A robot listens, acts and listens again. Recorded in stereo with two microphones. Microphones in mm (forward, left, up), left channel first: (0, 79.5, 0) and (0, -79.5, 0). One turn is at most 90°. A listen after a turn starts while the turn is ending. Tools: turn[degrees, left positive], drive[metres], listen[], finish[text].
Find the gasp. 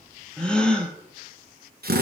Action: turn[30]
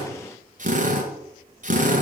Action: listen[]
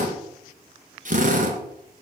Action: finish[I heard a gasp, but can't make it out now. It was about 25° right or 145° left.]